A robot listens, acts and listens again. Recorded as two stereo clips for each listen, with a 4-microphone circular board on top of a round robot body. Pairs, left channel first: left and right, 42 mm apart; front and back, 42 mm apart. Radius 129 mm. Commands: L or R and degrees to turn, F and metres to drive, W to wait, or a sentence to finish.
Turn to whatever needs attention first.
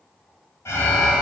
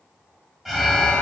L95
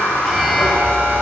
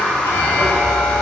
Facing the alarm.